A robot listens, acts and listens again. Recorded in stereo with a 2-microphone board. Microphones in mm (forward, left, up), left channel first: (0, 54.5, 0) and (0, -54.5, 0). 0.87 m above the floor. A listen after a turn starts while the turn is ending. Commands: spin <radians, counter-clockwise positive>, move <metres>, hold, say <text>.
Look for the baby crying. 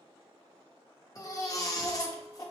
spin 0.52
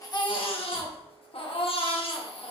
spin 2.01
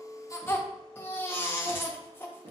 spin 0.35
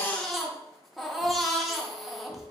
say Found it: a baby crying, straight ahead.